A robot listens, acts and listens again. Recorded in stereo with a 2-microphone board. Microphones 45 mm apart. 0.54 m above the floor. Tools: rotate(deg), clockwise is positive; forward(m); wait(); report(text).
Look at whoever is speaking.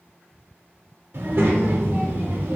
rotate(55)
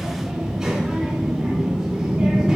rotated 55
rotate(10)
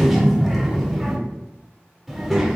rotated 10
report("Facing the child speaking, under 1 m away.")